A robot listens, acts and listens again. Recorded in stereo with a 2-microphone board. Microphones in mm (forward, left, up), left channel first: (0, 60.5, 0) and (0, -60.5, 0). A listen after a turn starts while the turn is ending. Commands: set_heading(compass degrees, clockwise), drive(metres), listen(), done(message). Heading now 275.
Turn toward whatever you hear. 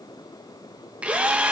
set_heading(305)
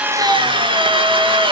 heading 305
set_heading(85)
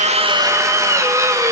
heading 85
set_heading(110)
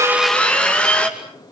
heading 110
set_heading(100)
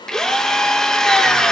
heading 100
done("Facing the drill, 2 to 4 m away.")